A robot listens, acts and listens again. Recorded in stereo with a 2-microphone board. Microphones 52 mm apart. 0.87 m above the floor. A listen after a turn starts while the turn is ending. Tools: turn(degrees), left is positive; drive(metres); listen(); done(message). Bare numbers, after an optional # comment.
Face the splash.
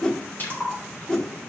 # The splash: about 40° left or 140° left.
turn(40)
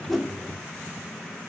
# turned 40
listen()
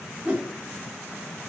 done("I heard a splash, but can't make it out now. It was about straight ahead or 100° left.")